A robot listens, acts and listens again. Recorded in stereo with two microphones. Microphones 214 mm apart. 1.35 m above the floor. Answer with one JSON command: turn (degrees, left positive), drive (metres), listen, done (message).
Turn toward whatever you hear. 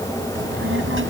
{"turn": -70}
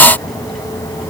{"listen": true}
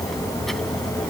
{"done": "Found it: a child speaking, straight ahead."}